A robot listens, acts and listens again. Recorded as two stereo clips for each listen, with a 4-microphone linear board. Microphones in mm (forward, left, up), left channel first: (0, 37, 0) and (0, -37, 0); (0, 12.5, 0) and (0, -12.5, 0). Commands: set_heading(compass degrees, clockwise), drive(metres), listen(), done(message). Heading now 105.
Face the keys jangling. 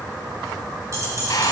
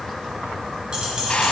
set_heading(145)
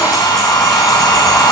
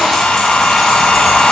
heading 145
listen()
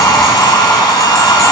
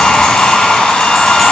listen()
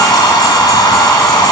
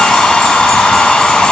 done("I heard keys jangling, but can't make it out now. It was about straight ahead or 100° right.")